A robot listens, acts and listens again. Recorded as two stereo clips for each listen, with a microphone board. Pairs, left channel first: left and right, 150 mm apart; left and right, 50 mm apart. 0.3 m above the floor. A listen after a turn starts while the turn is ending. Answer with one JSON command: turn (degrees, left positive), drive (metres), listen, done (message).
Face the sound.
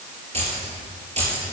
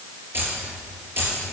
{"turn": -45}
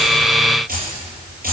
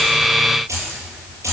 {"turn": -80}
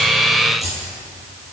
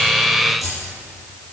{"done": "Found it: keys jangling, straight ahead."}